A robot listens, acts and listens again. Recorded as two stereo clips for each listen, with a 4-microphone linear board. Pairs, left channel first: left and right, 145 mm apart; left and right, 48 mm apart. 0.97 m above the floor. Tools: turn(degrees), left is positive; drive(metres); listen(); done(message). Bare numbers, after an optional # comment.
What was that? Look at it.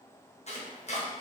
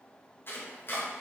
# The chopping: about 50° left or 130° left.
turn(50)
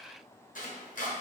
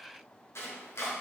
# So it is at 75° left.
turn(75)
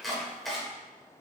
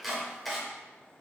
done("Facing the chopping.")